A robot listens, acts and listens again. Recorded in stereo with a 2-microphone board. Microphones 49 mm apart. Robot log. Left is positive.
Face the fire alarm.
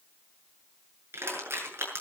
cmd idle
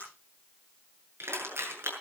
cmd idle
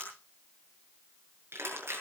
end: I can't make out a fire alarm to turn to.